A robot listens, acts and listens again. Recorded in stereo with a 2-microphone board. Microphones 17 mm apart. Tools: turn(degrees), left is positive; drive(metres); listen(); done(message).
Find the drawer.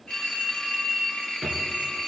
turn(degrees=-15)
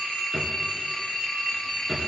done("Found it: a drawer, straight ahead.")